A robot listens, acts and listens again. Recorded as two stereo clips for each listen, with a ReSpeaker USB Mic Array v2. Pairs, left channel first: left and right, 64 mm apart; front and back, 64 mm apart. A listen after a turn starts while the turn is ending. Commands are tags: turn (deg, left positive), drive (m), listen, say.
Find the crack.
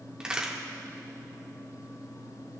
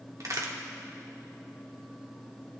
<turn deg="-165"/>
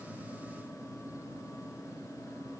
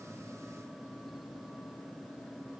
<say>I heard a crack from this way, but can't make it out now.</say>